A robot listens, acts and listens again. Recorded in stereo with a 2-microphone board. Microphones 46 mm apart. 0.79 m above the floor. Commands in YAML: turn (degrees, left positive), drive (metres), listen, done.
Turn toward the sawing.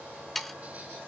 turn: 30
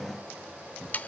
turn: 145
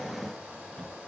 listen: true
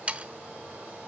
turn: -30
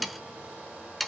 done: "Facing the sawing, under 1 m away."